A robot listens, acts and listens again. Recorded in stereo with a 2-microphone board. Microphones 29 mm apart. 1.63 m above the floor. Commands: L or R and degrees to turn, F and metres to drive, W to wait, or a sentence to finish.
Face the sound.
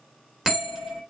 R30
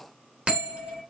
R140
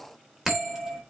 Facing the bell.